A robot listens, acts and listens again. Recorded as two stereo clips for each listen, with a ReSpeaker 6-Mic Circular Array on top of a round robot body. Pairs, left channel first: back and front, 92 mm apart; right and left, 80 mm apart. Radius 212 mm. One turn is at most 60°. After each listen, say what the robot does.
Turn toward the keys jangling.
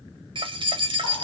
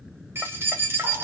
Turn 30° left.
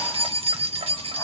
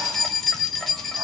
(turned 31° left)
Facing the keys jangling.